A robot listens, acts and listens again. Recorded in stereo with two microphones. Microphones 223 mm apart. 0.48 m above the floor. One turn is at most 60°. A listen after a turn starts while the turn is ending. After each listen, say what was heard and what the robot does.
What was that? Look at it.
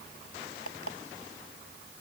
Turn 60° left.
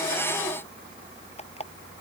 So it is at 30° left. Turn 30° left.
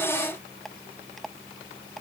Found it: an alarm clock, straight ahead.